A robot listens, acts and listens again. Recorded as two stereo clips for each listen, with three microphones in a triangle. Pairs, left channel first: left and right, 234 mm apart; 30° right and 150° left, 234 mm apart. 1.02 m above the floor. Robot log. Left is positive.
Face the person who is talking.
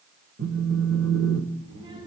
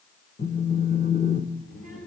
note: The child speaking: 20° right.
cmd yaw -20
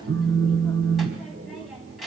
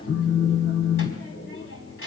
end: Found it: a child speaking, straight ahead.